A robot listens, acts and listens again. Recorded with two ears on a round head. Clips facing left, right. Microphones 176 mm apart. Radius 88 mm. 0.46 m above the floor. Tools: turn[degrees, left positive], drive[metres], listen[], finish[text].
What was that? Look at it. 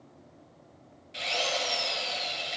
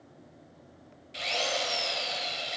Action: turn[30]
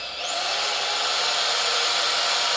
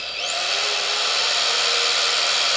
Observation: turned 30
Thought: So it is at 30° right.
Action: turn[-30]
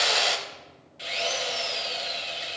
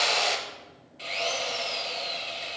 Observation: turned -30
Thought: The drill is now 10° left.
Action: turn[10]
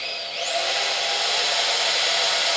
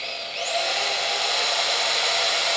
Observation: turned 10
Action: finish[Found it: a drill, straight ahead.]